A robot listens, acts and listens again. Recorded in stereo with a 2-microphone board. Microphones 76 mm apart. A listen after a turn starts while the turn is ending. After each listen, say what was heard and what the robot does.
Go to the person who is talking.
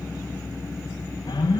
Keep listening.
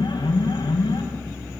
Keep listening.
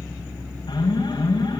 I can't make out anyone speaking, only an alarm.